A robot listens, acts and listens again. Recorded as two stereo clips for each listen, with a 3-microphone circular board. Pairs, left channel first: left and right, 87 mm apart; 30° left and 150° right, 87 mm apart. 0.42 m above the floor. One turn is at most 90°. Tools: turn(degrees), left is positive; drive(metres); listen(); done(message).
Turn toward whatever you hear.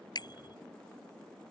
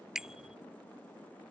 turn(degrees=90)
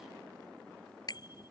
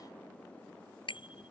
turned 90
turn(degrees=50)
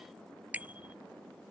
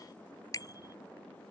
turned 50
turn(degrees=-20)
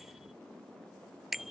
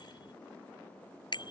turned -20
done("Facing the bicycle bell.")